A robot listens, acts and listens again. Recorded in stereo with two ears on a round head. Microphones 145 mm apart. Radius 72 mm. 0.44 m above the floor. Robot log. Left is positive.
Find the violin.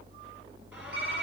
cmd idle
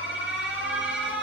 cmd idle
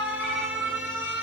end: I can't make out a violin, only typing on a keyboard and an alarm.